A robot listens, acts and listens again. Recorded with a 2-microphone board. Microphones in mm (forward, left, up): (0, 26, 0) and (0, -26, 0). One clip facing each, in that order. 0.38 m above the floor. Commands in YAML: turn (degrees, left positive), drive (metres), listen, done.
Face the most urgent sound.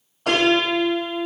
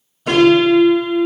listen: true
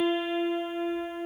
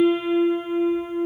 listen: true
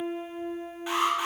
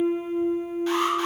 turn: 15
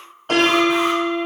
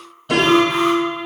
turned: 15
listen: true
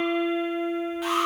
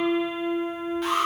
done: "Facing the alarm, 1 to 2 m away."